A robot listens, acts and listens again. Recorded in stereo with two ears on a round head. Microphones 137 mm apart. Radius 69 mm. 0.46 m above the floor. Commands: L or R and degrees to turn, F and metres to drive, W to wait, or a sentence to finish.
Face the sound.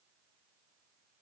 W
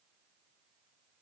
W
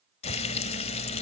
L40
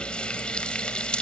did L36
L10
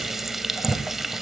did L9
Facing the frying, 1 to 2 m away.